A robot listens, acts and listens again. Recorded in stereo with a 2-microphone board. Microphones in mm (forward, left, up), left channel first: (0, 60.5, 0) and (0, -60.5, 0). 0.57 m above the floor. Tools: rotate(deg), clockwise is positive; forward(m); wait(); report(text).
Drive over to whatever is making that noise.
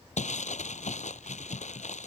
rotate(-90)
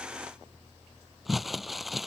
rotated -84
forward(1.0)
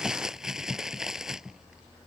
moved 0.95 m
forward(1.0)
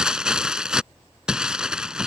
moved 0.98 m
forward(1.0)
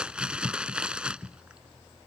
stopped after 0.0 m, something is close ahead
rotate(10)
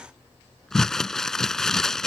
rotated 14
report("I am next to the crumpling.")